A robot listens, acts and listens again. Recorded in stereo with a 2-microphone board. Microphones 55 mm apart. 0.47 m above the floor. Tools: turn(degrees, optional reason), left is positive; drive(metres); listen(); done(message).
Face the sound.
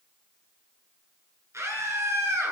turn(degrees=-65, reason="The scream: about 65° right or 115° right.")
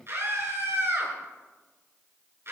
turn(degrees=-50, reason="So it is at 50° right.")
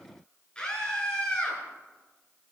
turn(degrees=15, reason="The scream is now 15° left.")
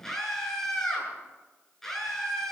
done("Found it: a scream, straight ahead, over 4 m away.")